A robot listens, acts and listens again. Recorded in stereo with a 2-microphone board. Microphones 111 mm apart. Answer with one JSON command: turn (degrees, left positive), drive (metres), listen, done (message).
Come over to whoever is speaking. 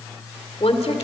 {"turn": 65}
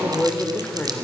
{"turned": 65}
{"turn": 15}
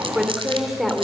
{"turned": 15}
{"drive": 1.0}
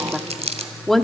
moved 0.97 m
{"drive": 1.0}
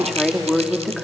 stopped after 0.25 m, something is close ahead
{"done": "Arrived at the woman speaking, straight ahead."}